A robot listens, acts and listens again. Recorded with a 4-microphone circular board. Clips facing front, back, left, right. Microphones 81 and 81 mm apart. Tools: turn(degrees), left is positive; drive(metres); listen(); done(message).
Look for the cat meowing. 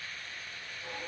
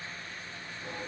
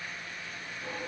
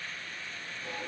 listen()
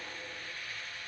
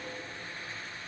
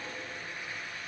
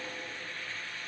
listen()
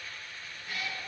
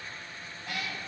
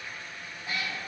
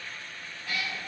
turn(degrees=155)
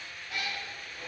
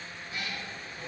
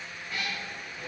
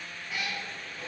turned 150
turn(degrees=-10)
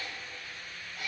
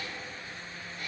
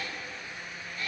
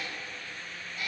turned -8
turn(degrees=-10)
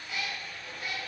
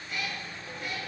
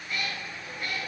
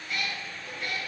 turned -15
done("Found it: a cat meowing, straight ahead, 2 to 4 m away.")